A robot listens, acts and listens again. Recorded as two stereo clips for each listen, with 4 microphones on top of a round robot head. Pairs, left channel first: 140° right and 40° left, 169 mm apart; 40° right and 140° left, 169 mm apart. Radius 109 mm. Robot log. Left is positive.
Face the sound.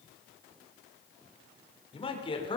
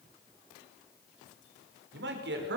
note: The man speaking: 160° left.
cmd yaw +160
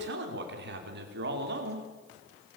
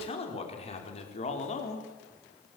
note: The man speaking is now 10° left.
cmd yaw +10
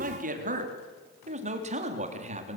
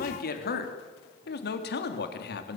note: The man speaking is now 10° right.
cmd yaw -10
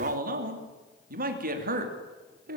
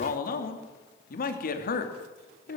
end: Found it: a man speaking, straight ahead, 2 to 4 m away.